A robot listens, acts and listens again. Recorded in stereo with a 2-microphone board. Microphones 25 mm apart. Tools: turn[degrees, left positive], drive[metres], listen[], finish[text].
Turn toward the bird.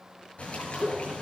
Thought: The bird: about 45° left or 135° left.
Action: turn[45]
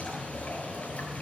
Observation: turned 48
Thought: So it is at 85° left.
Action: turn[85]
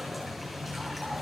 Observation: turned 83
Action: finish[Facing the bird, over 4 m away.]